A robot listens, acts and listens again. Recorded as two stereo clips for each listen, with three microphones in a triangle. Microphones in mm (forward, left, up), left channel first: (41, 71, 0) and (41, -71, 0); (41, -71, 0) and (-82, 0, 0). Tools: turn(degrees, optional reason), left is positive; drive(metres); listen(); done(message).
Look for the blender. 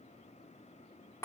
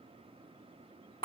listen()
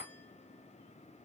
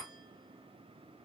listen()
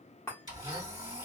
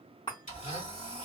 turn(degrees=-35, reason="The blender: 35° right.")
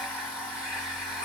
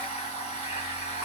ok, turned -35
done("Facing the blender, 2 to 4 m away.")